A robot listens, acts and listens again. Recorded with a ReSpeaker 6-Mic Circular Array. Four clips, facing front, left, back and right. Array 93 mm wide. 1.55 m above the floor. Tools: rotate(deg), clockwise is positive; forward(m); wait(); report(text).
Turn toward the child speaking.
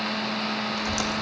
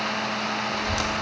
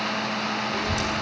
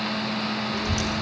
rotate(160)
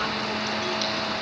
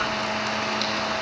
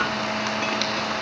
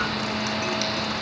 wait()
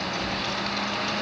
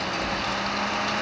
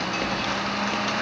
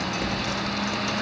rotate(10)
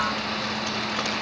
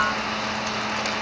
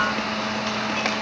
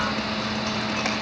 report("Found it: a child speaking, straight ahead, over 4 m away.")